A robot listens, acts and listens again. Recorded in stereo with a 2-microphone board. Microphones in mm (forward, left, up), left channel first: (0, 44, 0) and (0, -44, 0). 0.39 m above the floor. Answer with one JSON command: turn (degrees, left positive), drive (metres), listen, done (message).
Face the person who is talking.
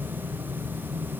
{"listen": true}
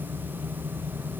{"listen": true}
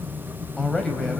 {"turn": 30}
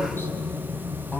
{"turn": 160}
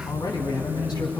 {"turn": 50}
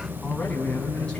{"turn": 10}
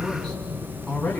{"done": "Found it: a man speaking, straight ahead."}